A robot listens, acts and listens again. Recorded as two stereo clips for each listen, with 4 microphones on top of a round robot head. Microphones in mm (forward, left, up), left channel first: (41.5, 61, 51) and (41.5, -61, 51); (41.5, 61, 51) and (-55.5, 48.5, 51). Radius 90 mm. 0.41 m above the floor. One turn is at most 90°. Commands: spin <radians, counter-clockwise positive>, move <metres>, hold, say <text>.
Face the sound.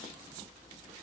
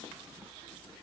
hold
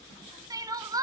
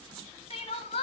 spin -0.52
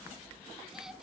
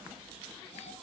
hold
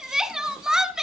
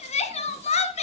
say Found it: crying, straight ahead.